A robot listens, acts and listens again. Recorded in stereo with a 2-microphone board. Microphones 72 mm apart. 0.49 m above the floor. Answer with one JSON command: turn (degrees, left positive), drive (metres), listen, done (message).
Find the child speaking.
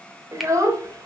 {"turn": -55}
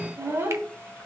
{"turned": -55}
{"turn": -35}
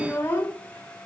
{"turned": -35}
{"turn": 30}
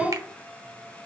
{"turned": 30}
{"turn": 15}
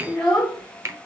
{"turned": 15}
{"turn": 15}
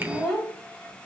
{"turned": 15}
{"done": "Found it: a child speaking, straight ahead."}